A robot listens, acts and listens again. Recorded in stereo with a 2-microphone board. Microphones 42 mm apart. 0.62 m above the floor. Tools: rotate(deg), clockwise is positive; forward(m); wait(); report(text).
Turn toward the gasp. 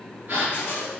rotate(55)
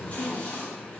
wait()
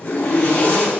report("I heard a gasp, but can't make it out now. It was about straight ahead or 70° right.")